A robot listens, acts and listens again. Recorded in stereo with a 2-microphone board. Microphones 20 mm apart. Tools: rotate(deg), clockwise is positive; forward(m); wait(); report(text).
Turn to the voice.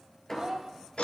rotate(35)
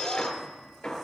wait()
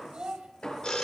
rotate(110)
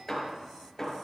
wait()
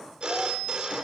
wait()
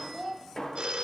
rotate(10)
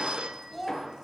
report("Found it: a child speaking, straight ahead, 2 to 4 m away.")